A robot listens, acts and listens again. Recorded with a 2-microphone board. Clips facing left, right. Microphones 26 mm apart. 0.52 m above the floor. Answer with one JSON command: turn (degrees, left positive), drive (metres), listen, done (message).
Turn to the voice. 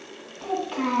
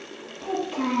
{"turn": 70}
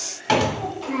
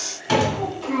{"done": "Found it: a child speaking, straight ahead, 1 to 2 m away."}